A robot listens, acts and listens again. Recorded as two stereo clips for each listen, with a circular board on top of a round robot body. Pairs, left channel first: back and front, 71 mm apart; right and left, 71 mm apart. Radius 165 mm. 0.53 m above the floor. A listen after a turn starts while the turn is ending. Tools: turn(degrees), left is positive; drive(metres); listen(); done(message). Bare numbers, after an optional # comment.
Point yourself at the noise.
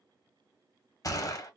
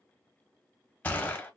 # The gunshot: 155° right.
turn(-155)
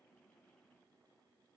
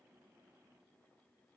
done("Facing where the gunshot came from. I can't hear it now.")